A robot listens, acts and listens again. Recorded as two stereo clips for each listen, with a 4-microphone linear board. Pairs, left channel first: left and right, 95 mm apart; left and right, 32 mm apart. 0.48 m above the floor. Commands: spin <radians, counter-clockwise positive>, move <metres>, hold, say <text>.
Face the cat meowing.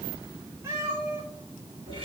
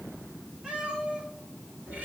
spin -0.52
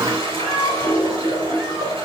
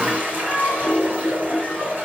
say Facing the cat meowing, over 4 m away.